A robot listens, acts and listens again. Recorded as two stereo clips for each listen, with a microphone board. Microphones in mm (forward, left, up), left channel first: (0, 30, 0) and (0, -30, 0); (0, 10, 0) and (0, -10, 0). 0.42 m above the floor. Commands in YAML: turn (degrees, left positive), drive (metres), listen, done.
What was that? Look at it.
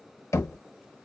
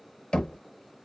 turn: 60
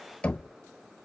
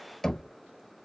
turn: 25
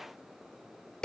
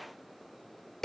turn: 15
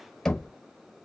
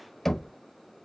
turn: 10
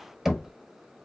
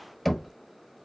done: "Facing the knocking."